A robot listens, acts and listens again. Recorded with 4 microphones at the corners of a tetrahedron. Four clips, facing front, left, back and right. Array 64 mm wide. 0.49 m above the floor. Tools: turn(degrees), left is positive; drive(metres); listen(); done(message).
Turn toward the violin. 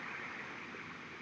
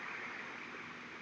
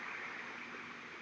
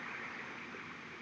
listen()
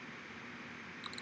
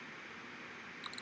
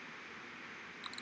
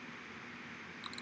listen()
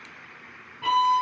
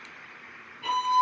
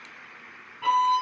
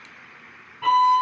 turn(degrees=-85)
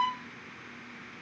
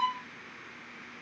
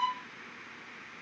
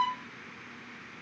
turn(degrees=-35)
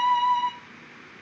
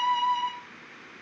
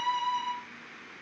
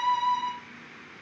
done("Facing the violin.")